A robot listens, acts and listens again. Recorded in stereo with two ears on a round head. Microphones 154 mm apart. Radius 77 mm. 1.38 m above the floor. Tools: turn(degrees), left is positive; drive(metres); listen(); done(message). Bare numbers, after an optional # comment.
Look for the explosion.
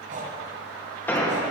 turn(30)
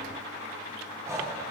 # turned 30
listen()
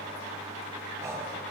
done("I heard an explosion, but can't make it out now. It was about 20° right or 140° left.")